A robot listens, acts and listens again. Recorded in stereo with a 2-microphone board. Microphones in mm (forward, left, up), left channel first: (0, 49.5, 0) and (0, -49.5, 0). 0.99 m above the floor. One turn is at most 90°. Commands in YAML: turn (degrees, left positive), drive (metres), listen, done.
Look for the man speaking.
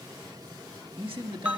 turn: -65
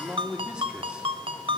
turn: -10
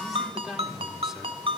done: "Found it: a man speaking, straight ahead, 2 to 4 m away."